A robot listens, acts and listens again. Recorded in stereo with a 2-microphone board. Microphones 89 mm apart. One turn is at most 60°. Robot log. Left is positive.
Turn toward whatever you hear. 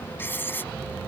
note: The writing: about 25° left or 155° left.
cmd yaw +25
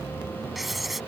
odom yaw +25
end: Found it: writing, straight ahead.